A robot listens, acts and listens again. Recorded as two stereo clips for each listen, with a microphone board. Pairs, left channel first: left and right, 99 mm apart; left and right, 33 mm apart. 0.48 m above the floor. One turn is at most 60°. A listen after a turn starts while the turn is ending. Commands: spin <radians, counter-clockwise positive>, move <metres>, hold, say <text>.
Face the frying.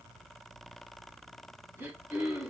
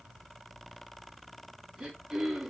hold
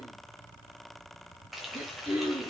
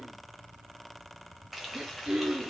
spin 0.52
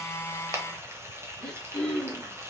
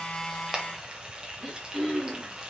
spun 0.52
spin -0.52
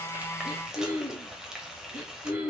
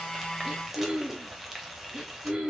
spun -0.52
say Found it: frying, straight ahead.